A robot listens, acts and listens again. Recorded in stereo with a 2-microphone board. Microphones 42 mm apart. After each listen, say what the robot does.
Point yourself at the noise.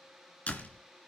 Turn 30° left.
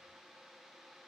Keep listening.
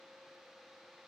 I heard a door slam, but can't make it out now. It was about straight ahead or 120° left.